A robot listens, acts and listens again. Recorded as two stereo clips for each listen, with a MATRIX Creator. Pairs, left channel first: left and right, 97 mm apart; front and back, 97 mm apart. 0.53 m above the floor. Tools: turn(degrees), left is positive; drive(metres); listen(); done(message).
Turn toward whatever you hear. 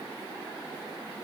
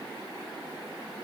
listen()
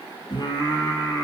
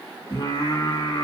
turn(degrees=40)
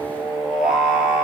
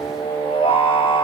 turn(degrees=-10)
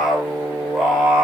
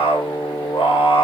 done("Found it: singing, straight ahead.")